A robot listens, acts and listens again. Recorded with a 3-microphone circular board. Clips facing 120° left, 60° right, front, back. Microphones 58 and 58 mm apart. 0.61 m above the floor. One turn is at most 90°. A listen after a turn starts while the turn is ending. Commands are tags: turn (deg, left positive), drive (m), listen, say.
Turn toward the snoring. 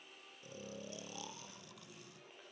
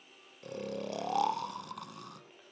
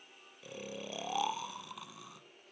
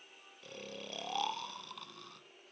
<turn deg="-80"/>
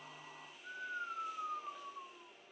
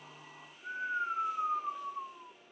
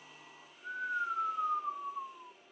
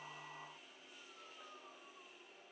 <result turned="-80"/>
<say>Facing the snoring.</say>